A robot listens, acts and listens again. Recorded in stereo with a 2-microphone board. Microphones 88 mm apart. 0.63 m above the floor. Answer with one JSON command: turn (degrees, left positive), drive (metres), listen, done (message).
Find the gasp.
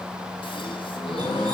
{"turn": 90}
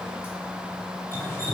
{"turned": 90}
{"done": "Facing where the gasp came from. I can't hear it now."}